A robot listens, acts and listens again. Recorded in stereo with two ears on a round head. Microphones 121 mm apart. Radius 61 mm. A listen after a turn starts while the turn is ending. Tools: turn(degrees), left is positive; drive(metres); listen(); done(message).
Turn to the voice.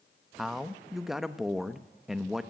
turn(degrees=30)
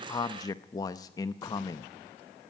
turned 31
turn(degrees=150)
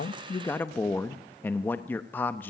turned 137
turn(degrees=15)
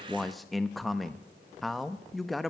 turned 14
done("Found it: a man speaking, straight ahead, under 1 m away.")